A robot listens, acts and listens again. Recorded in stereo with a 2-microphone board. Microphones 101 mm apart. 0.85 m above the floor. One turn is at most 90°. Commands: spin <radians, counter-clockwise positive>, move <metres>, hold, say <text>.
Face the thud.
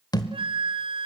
spin 0.70
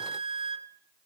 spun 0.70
hold
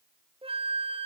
say I heard a thud, but can't make it out now. It was about straight ahead or 100° left.